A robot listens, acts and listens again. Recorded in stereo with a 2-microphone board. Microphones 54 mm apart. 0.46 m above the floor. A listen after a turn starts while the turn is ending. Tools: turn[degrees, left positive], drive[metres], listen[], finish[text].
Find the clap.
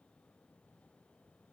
Action: listen[]
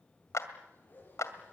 Thought: The clap: about 65° left or 115° left.
Action: turn[65]
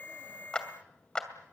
Thought: So it is at 15° left.
Action: turn[15]
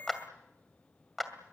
Action: finish[Found it: a clap, straight ahead, 2 to 4 m away.]